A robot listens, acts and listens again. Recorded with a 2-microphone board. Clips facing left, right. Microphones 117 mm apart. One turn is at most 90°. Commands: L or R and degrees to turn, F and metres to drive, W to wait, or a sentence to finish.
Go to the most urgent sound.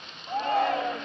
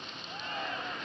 L90
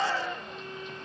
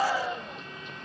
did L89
R15
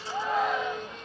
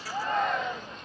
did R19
F1.0
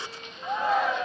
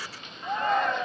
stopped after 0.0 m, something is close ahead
Something is in my way. I am facing the shout but have not reached it.